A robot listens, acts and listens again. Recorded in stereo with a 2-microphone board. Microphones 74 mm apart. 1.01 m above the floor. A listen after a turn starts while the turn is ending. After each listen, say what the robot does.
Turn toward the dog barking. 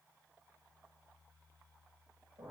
Keep listening.
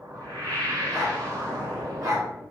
Turn 65° right.
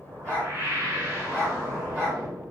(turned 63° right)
Turn 10° right.
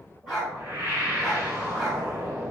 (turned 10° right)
Facing the dog barking.